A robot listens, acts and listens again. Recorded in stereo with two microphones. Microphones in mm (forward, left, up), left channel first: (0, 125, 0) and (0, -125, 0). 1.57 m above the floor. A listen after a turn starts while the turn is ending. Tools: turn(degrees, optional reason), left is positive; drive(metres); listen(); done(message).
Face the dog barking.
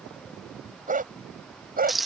turn(degrees=-35, reason="The dog barking: about 35° right or 145° right.")
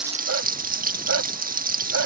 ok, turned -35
turn(degrees=-105, reason="So it is at 105° right.")
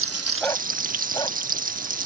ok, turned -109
listen()
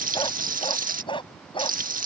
turn(degrees=20, reason="The dog barking is now 20° left.")
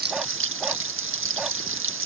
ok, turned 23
listen()
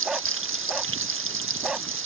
done("Facing the dog barking.")